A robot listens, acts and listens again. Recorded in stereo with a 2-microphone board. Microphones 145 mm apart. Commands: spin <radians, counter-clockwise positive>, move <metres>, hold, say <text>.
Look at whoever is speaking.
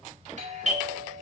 hold
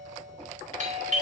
hold
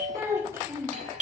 spin -0.35
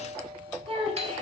spin -2.44
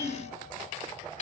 say Facing the child speaking, 2 to 4 m away.